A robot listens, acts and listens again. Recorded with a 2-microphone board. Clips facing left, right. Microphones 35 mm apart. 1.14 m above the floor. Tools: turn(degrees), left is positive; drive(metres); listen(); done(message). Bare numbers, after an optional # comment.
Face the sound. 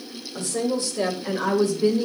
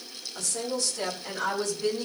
# The woman speaking: about 25° left or 155° left.
turn(25)
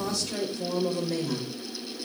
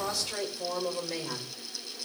# So it is at 10° right.
turn(-10)
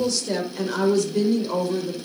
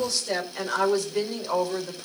# The woman speaking is now 15° right.
turn(-15)
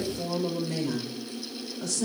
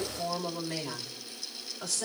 done("Found it: a woman speaking, straight ahead, over 4 m away.")